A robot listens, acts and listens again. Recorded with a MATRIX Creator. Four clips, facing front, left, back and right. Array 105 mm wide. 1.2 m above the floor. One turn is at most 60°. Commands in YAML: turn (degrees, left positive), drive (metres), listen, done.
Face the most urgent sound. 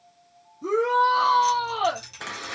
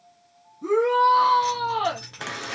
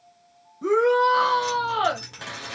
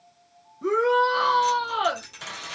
turn: -60
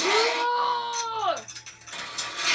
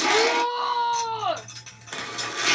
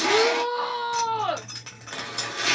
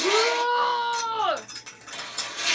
turn: -60
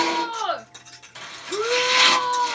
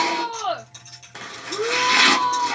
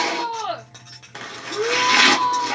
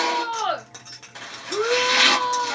turn: -50
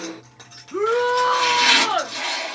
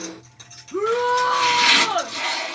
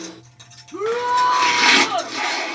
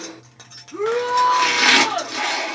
turn: 15
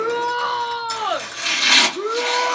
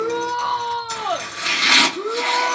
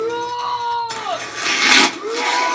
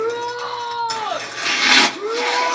done: "Found it: a shout, straight ahead, 1 to 2 m away."